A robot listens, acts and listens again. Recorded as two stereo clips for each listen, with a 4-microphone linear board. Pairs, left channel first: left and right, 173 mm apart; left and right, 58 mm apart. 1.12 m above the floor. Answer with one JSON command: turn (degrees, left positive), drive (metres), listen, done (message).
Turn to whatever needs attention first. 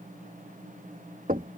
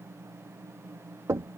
{"listen": true}
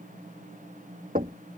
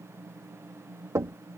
{"listen": true}
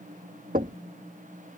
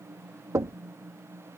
{"done": "I can't make out anything urgent, only knocking."}